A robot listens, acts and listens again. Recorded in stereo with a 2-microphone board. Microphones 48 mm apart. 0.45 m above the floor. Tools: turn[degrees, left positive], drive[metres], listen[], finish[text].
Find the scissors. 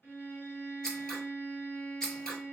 Action: turn[30]
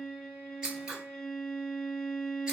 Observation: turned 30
Thought: So it is at 15° right.
Action: turn[-15]
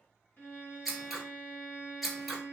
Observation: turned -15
Action: finish[Facing the scissors.]